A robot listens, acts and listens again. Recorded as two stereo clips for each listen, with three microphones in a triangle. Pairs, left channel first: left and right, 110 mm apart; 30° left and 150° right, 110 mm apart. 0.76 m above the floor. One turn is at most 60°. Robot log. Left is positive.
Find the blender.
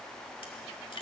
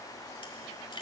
cmd idle
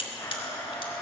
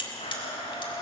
note: The blender: 25° left.
cmd yaw +25
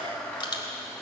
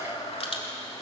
note: The blender is now 10° left.
cmd yaw +10
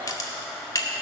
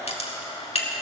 end: Facing the blender, 2 to 4 m away.